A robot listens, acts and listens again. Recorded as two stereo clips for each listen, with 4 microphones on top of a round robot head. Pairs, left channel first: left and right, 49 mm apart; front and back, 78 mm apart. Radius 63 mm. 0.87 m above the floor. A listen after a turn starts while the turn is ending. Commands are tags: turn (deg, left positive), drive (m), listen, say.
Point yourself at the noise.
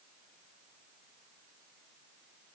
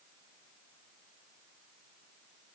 <listen/>
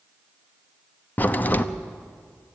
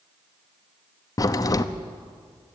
<turn deg="40"/>
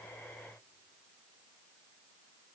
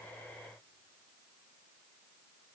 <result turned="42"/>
<say>I heard a crack from this way, but can't make it out now.</say>